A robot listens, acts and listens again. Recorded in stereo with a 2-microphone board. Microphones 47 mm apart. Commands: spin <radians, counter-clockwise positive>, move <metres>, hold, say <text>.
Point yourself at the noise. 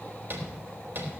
spin -0.79
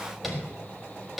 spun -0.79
say Found it: tapping, straight ahead.